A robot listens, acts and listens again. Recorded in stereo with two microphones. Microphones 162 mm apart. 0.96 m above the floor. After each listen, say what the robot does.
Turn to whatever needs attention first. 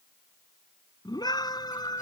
Turn 25° left.
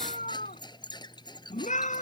Turn 130° left.
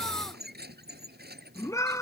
Turn 20° left.
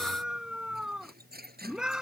Facing the scream.